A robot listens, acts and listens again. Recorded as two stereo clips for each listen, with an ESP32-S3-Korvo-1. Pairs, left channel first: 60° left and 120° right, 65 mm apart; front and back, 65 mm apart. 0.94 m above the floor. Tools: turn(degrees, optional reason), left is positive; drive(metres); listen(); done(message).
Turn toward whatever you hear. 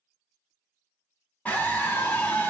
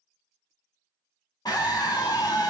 turn(degrees=-10, reason="The scream: 10° right.")
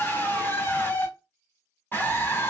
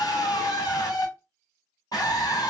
done("Facing the scream.")